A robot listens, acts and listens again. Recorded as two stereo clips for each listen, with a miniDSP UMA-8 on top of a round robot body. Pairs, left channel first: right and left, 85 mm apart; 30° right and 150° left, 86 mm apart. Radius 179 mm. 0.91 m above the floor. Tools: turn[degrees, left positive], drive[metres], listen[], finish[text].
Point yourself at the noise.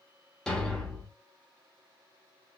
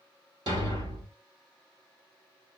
Thought: The thud: 175° right.
Action: turn[-175]
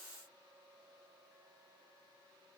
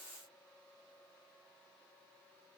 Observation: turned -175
Action: finish[Facing where the thud came from. I can't hear it now.]